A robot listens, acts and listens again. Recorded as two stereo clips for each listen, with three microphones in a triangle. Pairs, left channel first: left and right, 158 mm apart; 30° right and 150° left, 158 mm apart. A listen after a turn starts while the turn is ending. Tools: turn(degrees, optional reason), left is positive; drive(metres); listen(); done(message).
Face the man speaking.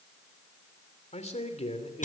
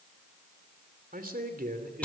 turn(degrees=140, reason="The man speaking: 140° left.")
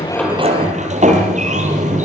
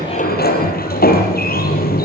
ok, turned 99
turn(degrees=40, reason="Nothing new. It was at 40° left.")
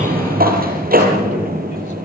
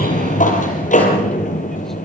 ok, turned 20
turn(degrees=20, reason="Nothing new. It was at 20° left.")
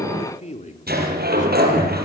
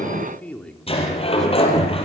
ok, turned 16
turn(degrees=55, reason="The man speaking is now 55° left.")
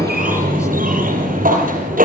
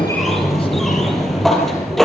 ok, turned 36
turn(degrees=15, reason="Nothing new. It was at 15° left.")
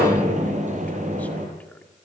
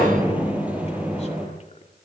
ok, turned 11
listen()
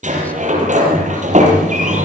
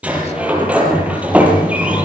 done("Facing where the man speaking came from. I can't hear it now.")